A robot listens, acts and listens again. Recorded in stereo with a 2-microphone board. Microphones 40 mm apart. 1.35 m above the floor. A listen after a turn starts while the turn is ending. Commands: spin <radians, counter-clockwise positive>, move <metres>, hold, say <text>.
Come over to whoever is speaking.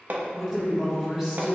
spin -0.26
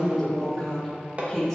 move 1.0
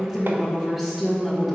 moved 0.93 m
spin -0.17
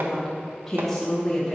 move 1.0
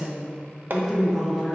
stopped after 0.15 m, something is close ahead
say Arrived at the woman speaking, straight ahead.